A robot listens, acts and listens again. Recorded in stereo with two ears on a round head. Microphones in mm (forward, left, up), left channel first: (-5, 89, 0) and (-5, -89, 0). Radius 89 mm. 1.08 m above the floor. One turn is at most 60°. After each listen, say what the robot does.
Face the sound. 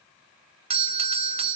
Turn 30° right.
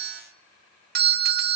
Turn 60° right.
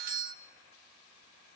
Turn 55° right.
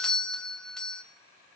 Facing the doorbell, under 1 m away.